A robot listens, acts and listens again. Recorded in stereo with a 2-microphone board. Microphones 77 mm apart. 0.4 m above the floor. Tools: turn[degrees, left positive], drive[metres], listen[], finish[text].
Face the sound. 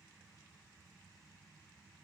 Action: listen[]
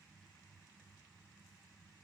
Action: listen[]
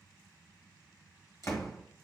Thought: The door slam: about 40° left or 140° left.
Action: turn[40]
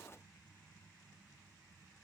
Action: listen[]
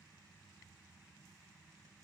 Action: finish[I heard a door slam, but can't make it out now. It was about straight ahead or 100° left.]